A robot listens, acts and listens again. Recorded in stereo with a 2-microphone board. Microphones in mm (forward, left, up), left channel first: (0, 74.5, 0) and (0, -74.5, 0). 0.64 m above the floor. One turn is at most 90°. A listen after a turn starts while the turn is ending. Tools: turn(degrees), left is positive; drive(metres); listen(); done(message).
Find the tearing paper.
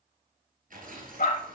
turn(degrees=-65)
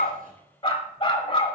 listen()
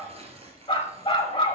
turn(degrees=-45)
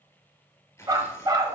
turn(degrees=20)
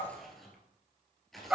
done("Facing the tearing paper, 1 to 2 m away.")